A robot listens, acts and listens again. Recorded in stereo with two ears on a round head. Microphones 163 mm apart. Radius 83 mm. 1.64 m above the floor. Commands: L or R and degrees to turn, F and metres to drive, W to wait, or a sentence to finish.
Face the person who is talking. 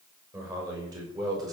R20
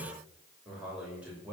R30
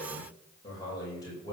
L20
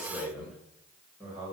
Found it: a man speaking, straight ahead.